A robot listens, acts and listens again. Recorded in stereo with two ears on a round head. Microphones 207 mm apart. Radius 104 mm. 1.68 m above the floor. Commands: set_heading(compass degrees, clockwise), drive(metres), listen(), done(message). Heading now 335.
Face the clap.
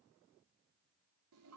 listen()
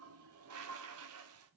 listen()
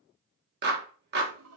set_heading(20)
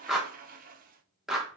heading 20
done("Facing the clap, 1 to 2 m away.")